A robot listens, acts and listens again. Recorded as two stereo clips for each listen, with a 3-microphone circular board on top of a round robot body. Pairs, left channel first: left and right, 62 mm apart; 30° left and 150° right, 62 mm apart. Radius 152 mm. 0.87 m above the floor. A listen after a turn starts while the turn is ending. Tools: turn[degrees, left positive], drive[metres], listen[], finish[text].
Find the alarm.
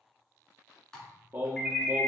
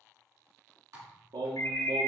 Action: finish[Found it: an alarm, straight ahead.]